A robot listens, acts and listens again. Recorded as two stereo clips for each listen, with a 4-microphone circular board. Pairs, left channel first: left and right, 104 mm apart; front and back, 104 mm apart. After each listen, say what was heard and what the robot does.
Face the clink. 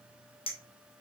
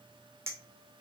The clink: 115° left. Turn 115° left.
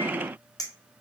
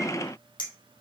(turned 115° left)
The clink is now 40° left. Turn 40° left.
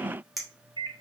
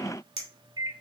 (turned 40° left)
Found it: a clink, straight ahead, 2 to 4 m away.